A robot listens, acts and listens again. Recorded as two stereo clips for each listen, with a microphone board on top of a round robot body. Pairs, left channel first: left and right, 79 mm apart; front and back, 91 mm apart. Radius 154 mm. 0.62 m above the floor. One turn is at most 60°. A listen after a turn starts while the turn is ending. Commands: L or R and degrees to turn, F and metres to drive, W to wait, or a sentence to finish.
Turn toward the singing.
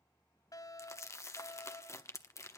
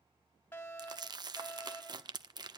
W
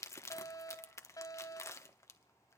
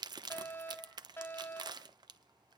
W
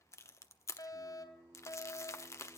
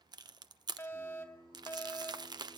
R60
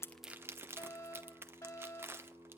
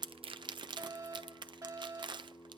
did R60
R60
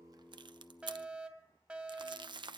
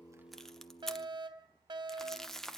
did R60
R10
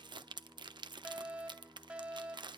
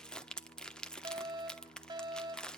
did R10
Found it: singing, straight ahead, 2 to 4 m away.